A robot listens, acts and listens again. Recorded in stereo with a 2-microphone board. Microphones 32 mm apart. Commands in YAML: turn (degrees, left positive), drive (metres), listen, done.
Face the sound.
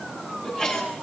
turn: 30
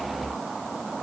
listen: true
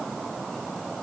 done: "I heard a sneeze, but can't make it out now. It was about straight ahead or 120° left."